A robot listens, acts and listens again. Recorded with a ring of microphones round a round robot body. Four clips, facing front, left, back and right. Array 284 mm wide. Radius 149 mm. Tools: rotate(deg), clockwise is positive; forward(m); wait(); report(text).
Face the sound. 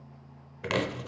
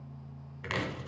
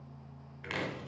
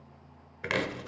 rotate(25)
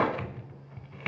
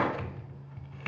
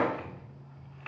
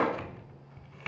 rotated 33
report("Found it: chopping, straight ahead, 1 to 2 m away.")